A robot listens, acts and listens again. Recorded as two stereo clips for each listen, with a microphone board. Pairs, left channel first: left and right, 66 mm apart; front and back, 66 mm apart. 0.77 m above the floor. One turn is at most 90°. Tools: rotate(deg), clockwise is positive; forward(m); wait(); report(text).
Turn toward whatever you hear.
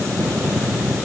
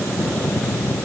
wait()
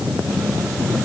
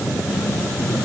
wait()
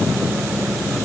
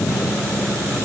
report("I can't make out anything.")